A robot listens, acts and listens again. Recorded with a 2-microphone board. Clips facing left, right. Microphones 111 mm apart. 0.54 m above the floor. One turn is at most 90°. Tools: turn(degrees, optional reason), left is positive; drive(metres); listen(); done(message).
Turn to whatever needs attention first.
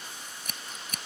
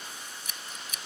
listen()
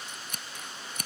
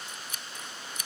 listen()
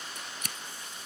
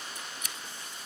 done("I can't make out anything urgent, only scissors.")